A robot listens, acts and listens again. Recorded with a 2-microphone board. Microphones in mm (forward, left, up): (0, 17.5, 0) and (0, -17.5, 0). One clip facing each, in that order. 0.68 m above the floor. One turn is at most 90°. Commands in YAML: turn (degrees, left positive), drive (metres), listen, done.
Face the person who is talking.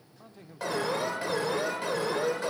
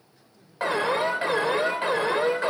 turn: 50
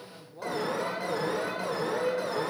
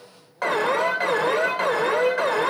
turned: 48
turn: 75
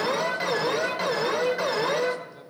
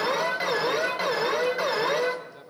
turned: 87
turn: -10
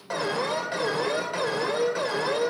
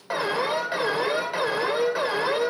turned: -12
listen: true
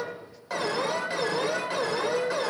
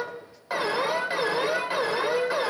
listen: true
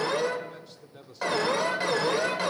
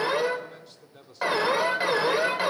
done: "Found it: a man speaking, straight ahead, 1 to 2 m away."